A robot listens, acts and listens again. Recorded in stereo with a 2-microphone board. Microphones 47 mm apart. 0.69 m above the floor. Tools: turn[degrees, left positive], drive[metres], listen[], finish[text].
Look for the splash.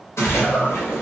Action: turn[90]
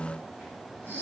Action: finish[I heard a splash from this way, but can't make it out now.]